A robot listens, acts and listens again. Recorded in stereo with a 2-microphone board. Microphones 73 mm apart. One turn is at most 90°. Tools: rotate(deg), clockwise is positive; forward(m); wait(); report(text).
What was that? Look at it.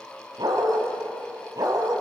rotate(65)
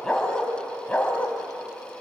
rotate(-20)
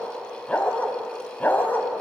rotate(-25)
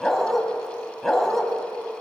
report("Facing the dog barking.")